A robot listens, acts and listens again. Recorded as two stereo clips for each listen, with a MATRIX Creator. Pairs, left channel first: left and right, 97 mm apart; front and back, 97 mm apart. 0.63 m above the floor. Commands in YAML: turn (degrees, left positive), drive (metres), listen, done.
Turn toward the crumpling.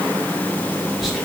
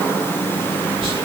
listen: true
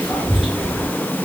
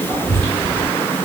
listen: true
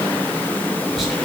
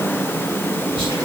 done: "I can't make out crumpling to turn to."